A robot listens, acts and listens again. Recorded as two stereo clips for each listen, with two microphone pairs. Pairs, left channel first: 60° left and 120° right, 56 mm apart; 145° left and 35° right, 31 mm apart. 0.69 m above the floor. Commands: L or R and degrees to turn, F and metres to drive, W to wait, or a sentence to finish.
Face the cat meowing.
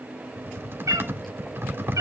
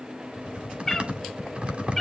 R130
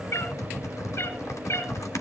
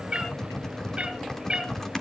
L30
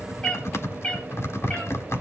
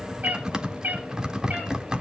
R10
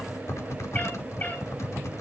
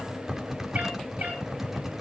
W
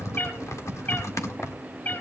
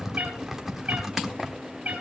Facing the cat meowing.